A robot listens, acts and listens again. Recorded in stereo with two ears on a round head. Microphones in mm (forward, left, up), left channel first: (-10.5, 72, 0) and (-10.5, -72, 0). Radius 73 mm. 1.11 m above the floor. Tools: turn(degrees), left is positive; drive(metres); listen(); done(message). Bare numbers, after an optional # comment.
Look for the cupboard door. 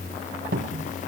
# The cupboard door: about 55° right or 125° right.
turn(-55)
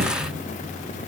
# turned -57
listen()
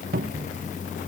# So it is at 60° right.
turn(-60)
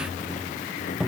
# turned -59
done("Found it: a cupboard door, straight ahead.")